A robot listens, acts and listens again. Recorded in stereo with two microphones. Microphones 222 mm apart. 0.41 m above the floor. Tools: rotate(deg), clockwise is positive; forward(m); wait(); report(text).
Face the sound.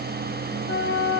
rotate(-55)
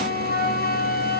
rotate(-50)
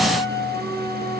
rotate(-20)
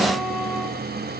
wait()
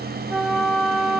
report("Facing the flute.")